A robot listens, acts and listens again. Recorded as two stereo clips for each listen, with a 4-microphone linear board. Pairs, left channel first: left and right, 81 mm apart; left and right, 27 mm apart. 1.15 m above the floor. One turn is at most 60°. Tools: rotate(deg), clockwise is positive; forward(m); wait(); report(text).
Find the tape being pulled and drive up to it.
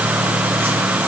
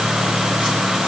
wait()
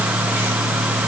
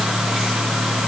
wait()
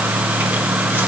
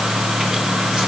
report("I can't make out tape being pulled to turn to.")